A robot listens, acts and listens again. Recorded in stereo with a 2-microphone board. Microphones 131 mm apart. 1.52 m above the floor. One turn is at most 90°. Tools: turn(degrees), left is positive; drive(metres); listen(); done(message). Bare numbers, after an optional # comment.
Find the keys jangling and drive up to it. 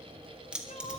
turn(-30)
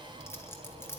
# So it is at 20° left.
turn(20)
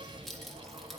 drive(1.0)
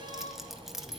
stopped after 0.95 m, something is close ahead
done("I am next to the keys jangling.")